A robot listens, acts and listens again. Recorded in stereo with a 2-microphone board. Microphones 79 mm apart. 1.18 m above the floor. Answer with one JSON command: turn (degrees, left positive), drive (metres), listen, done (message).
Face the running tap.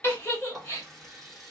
{"turn": 30}
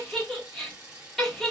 {"turn": -30}
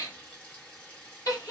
{"turn": 15}
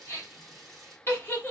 {"done": "Found it: a running tap, straight ahead, 1 to 2 m away."}